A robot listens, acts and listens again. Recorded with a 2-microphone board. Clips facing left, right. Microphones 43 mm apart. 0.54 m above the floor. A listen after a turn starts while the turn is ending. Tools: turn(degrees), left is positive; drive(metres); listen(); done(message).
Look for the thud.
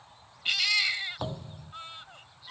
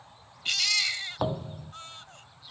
turn(degrees=-20)
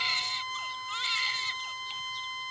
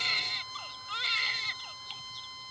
listen()
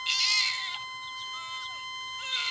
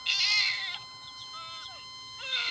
done("I heard a thud, but can't make it out now. It was about straight ahead or 140° right.")